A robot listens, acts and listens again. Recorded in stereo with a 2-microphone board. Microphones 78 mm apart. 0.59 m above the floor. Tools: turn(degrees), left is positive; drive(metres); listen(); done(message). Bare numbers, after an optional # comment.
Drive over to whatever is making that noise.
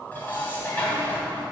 # The dishes clattering: about 20° left or 160° left.
turn(20)
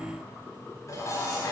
# So it is at 140° left.
turn(140)
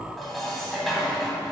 drive(1.0)
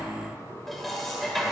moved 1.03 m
drive(1.0)
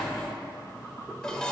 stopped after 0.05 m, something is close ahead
# The dishes clattering is now 10° left.
turn(10)
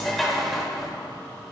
done("I am next to the dishes clattering.")